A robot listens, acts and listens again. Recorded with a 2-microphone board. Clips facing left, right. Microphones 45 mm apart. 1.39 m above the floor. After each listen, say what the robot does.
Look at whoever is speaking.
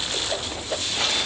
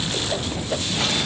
Keep listening.
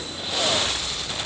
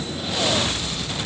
Keep listening.
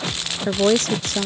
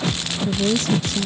Turn 55° left.
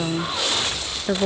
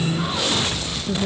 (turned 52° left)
Turn 65° left.
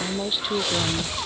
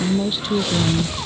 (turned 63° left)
Found it: a woman speaking, straight ahead.